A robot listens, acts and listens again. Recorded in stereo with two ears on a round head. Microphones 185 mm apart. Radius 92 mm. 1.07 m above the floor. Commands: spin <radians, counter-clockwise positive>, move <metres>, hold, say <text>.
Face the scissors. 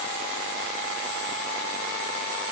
hold
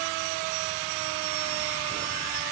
hold
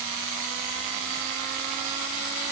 say I can't make out scissors.